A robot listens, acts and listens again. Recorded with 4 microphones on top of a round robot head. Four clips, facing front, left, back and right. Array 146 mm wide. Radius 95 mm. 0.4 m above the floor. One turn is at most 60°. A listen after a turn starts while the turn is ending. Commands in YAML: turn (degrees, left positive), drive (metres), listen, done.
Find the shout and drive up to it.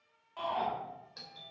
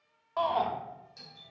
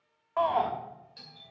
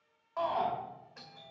turn: 60
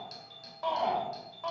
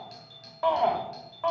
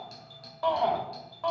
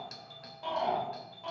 turn: 60
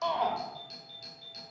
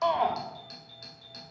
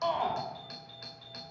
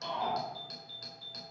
turn: 50
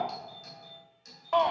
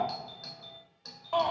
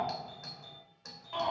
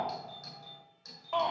turn: 10
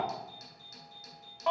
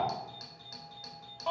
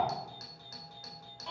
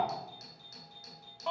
drive: 1.0
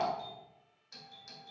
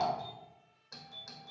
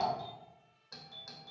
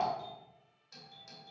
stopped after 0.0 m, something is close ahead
done: "Blocked. The shout is further on, straight ahead."